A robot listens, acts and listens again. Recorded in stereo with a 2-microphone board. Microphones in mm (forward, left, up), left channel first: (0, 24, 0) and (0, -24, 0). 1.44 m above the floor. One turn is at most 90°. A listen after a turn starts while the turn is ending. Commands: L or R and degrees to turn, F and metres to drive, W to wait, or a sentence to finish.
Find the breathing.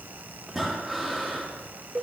R30
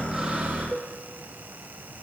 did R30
W
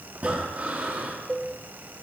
R90
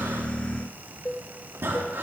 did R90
R60
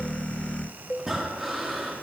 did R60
Facing the breathing.